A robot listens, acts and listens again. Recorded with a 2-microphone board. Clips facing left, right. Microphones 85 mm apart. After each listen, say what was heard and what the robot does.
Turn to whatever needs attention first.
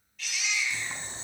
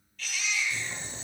Turn 30° left.
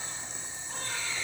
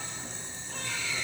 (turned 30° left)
So it is at 140° left. Turn 140° left.
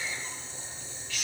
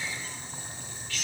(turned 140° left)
Facing the baby crying, over 4 m away.